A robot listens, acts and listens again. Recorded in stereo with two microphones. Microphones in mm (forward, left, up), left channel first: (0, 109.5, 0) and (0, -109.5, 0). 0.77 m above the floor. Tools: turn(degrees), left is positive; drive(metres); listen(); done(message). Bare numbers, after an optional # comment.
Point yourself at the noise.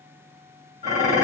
# The dishes clattering: about 40° right or 140° right.
turn(-40)
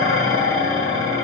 # So it is at 100° right.
turn(-100)
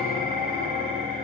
# The dishes clattering is now 25° right.
turn(-25)
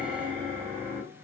# The dishes clattering is now 25° right.
turn(-25)
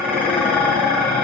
done("Facing the dishes clattering.")